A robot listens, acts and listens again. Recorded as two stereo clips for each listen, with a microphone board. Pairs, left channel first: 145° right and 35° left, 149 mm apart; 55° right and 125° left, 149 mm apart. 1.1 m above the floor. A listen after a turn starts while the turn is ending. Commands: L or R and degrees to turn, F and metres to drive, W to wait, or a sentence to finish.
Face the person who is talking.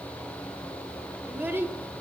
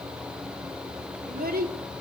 L110
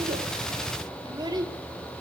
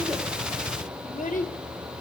R30
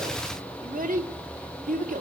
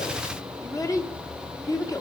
L10
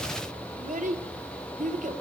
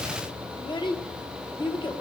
Found it: a child speaking, straight ahead, 2 to 4 m away.